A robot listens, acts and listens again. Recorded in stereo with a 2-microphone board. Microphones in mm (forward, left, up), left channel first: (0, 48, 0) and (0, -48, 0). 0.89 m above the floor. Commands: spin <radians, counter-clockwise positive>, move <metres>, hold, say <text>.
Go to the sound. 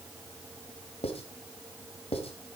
spin 1.57
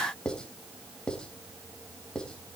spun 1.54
spin 0.17
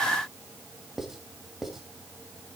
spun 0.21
move 1.0
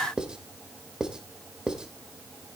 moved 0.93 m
spin -0.17
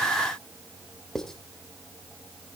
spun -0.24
move 1.0
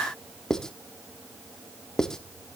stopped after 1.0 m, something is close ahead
say I am next to the writing.